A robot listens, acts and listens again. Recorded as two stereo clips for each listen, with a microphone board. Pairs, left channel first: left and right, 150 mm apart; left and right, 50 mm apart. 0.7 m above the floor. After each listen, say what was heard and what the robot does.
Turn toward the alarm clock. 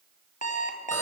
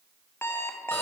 The alarm clock: about 55° left or 125° left. Turn 55° left.
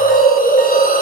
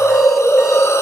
Keep listening.
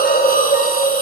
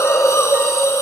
Keep listening.
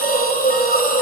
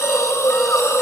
I heard an alarm clock, but can't make it out now. It was about straight ahead or 70° left.